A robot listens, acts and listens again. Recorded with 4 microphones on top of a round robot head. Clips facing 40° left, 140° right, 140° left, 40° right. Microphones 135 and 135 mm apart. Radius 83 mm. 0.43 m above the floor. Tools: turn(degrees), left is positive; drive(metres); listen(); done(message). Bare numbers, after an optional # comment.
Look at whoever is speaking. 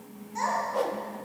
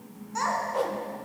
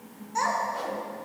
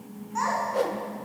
# The child speaking: 165° right.
turn(-165)
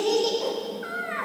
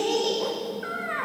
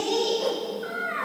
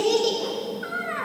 # The child speaking is now 10° right.
turn(-10)
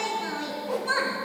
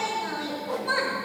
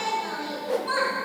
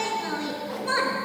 done("Found it: a child speaking, straight ahead.")